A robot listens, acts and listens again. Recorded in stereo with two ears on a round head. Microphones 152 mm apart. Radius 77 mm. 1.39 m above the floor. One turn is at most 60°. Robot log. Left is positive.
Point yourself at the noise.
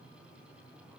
cmd idle
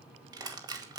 note: The crushing: about 25° right or 155° right.
cmd yaw -25
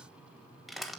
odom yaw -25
end: Found it: crushing, straight ahead.